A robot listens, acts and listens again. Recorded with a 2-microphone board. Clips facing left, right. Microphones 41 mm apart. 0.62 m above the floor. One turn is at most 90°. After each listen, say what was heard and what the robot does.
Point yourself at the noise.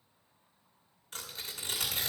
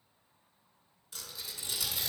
The tearing paper: about 55° left or 125° left. Turn 55° left.
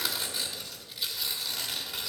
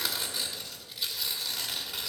Facing the tearing paper, 1 to 2 m away.